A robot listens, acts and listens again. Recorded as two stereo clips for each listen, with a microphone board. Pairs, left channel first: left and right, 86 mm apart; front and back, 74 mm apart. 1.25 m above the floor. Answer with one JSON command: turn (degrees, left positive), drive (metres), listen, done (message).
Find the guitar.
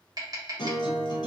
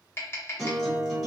{"turn": 90}
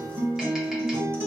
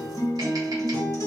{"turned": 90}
{"turn": -30}
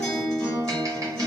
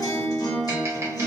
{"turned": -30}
{"turn": 10}
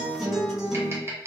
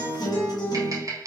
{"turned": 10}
{"done": "Found it: a guitar, straight ahead, under 1 m away."}